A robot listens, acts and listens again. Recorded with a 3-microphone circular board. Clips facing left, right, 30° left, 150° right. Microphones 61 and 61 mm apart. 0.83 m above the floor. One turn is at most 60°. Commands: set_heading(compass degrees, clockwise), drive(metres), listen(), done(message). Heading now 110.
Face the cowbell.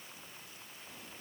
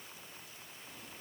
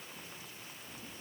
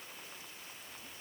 listen()
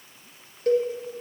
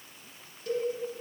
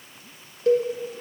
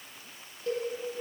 set_heading(60)
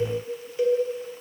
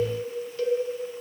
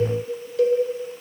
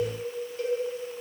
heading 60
set_heading(40)
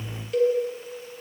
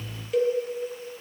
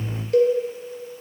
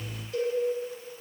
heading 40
done("Found it: a cowbell, straight ahead, 1 to 2 m away.")